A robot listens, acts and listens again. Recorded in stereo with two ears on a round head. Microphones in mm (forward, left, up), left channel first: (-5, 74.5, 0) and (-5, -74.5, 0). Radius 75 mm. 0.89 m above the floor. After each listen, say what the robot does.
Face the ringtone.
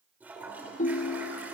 Turn 45° left.
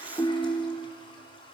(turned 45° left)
Turn 10° left.
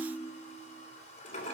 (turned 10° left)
Found it: a ringtone, straight ahead, under 1 m away.